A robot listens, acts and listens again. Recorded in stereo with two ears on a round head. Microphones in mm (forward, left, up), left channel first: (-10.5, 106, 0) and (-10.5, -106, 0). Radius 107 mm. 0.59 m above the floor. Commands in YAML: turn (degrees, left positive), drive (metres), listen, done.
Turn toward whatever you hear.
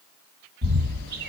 turn: -45
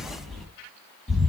done: "Facing the bird."